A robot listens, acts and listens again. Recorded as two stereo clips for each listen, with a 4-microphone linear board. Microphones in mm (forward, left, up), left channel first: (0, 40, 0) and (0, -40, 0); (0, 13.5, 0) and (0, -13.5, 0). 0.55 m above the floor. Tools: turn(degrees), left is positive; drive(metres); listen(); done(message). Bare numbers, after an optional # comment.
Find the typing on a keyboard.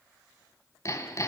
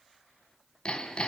listen()
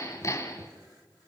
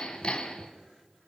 listen()
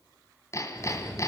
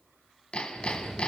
turn(30)
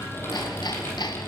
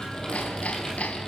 # So it is at 150° left.
turn(150)
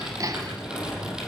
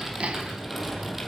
# The typing on a keyboard is now 10° right.
turn(-10)
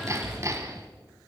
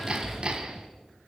done("Facing the typing on a keyboard.")